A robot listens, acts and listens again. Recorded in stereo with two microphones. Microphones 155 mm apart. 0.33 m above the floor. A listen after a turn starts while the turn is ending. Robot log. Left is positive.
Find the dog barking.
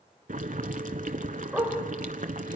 cmd yaw -30
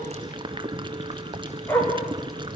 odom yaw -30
note: So it is at 20° left.
cmd yaw +20
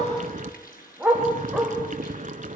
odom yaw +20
end: Facing the dog barking.